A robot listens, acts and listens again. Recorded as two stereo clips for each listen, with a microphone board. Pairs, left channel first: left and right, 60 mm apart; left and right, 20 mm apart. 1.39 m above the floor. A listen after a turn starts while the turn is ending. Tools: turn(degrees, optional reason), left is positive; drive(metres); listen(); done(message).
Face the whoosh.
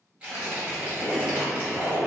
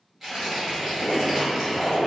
turn(degrees=50, reason="The whoosh: about 50° left or 130° left.")
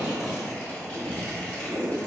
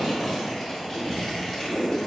turn(degrees=75, reason="So it is at 75° left.")
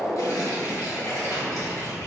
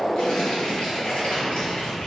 listen()
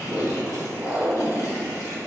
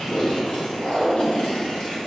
done("Found it: a whoosh, straight ahead, under 1 m away.")